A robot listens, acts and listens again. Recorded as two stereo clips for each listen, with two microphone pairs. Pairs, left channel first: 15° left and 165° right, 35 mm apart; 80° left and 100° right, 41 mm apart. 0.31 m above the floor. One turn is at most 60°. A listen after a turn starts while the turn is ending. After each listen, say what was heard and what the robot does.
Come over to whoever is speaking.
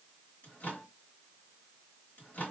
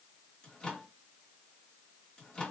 Keep listening.
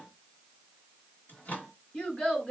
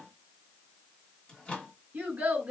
The child speaking: 45° right. Turn 45° right.
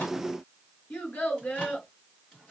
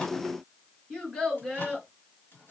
Drive 1.0 m forward.
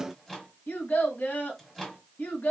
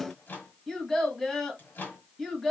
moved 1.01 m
Drive 1.0 m forward.
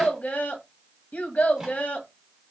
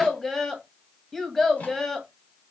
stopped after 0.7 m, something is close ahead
Arrived at the child speaking, straight ahead.